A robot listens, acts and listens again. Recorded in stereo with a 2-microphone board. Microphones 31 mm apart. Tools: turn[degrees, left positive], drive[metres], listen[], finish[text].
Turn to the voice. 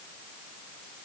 Action: listen[]
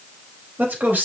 Thought: The man speaking: about 65° right or 115° right.
Action: turn[-65]
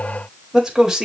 Thought: So it is at 15° right.
Action: turn[-15]
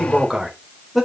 Action: finish[Found it: a man speaking, straight ahead.]